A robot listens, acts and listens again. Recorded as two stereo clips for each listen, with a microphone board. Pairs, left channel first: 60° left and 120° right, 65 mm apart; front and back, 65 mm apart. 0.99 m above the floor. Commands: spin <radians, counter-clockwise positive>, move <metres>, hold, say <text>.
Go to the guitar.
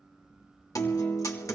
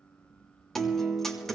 spin 1.48
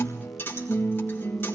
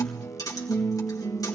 spin 0.17
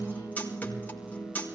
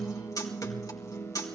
move 1.0
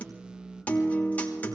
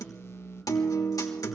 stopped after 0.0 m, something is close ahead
say Something is in my way. I am facing the guitar but have not reached it.